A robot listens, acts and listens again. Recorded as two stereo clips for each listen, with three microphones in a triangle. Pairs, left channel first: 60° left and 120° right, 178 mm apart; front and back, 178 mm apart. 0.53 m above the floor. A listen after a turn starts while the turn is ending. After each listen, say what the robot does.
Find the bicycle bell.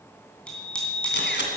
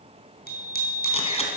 Turn 25° right.
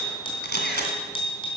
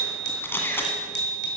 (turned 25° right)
Facing the bicycle bell, 2 to 4 m away.